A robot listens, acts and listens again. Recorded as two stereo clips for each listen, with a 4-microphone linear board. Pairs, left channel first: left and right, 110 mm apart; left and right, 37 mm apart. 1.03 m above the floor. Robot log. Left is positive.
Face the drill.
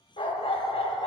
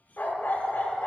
cmd idle
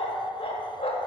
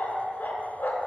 cmd idle
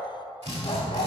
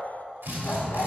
cmd yaw -90
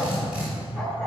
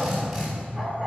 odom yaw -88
note: So it is at 10° right.
cmd yaw -10
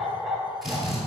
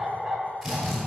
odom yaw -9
end: Found it: a drill, straight ahead, 2 to 4 m away.